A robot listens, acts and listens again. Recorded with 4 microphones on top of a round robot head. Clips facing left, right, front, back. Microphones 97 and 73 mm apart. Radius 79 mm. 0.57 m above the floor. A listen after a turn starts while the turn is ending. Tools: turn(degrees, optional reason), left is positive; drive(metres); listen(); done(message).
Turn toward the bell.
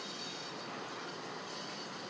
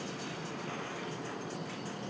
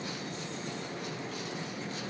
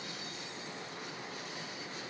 listen()
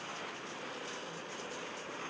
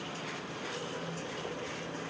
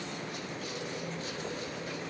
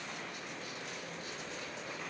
listen()
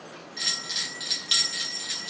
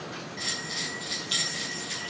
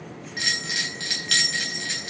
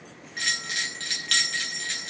turn(degrees=85, reason="The bell: 85° left.")
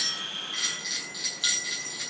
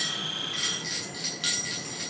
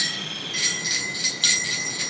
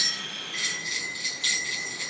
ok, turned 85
done("Found it: a bell, straight ahead.")